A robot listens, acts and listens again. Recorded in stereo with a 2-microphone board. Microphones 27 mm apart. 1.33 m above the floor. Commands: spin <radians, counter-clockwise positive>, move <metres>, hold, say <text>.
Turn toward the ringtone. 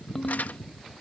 spin 0.52
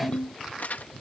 spin 2.44
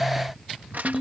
spin -0.26
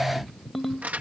say Found it: a ringtone, straight ahead.